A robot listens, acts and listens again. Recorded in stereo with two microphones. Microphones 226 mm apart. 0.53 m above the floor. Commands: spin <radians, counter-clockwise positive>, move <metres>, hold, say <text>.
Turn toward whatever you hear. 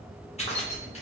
spin 0.52
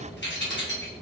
spin 2.01
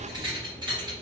spin -0.35
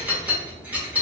spin -0.17
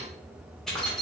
say Found it: keys jangling, straight ahead.